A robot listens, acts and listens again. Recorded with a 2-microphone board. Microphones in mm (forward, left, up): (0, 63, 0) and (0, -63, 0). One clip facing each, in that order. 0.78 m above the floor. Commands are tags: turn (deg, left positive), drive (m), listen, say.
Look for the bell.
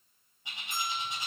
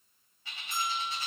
<turn deg="50"/>
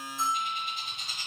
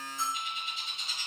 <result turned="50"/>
<turn deg="70"/>
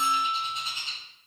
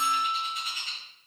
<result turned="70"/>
<say>Found it: a bell, straight ahead, 1 to 2 m away.</say>